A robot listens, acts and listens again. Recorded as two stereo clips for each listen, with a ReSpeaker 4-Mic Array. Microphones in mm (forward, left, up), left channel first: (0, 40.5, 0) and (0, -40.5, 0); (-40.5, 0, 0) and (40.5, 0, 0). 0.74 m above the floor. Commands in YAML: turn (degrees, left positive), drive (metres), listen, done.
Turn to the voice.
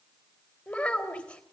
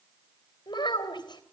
turn: 160
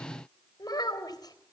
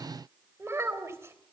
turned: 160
turn: 55
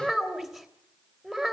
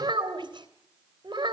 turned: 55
done: "Facing the child speaking."